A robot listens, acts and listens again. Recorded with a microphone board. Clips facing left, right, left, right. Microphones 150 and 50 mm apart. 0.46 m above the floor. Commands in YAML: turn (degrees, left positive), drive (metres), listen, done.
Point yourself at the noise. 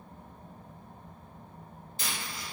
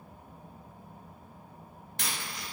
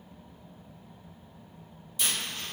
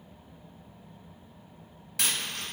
turn: -90
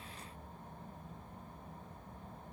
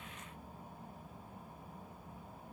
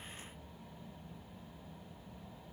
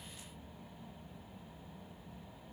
done: "Facing where the dropped coin came from. I can't hear it now."